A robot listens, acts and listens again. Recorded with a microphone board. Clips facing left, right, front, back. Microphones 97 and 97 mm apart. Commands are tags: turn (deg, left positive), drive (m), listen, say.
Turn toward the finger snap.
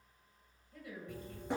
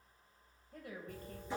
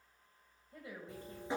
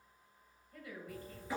<listen/>
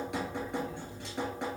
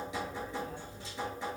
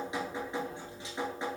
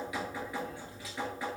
<listen/>
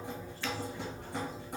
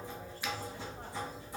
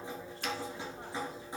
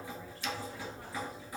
<turn deg="-15"/>
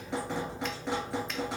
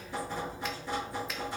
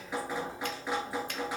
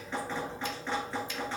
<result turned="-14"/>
<listen/>
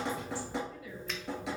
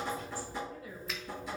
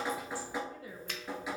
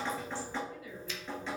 <listen/>
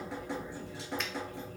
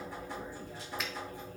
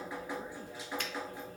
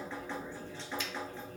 <say>I heard a finger snap from this way, but can't make it out now.</say>